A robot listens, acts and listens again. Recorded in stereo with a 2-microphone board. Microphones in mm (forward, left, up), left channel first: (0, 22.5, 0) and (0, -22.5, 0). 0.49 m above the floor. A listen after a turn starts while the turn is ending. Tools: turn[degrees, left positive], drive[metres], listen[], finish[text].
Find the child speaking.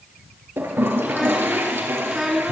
Action: turn[-30]
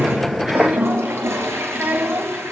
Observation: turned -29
Thought: So it is at 140° right.
Action: turn[-140]
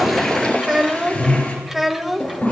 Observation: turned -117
Action: finish[Found it: a child speaking, straight ahead.]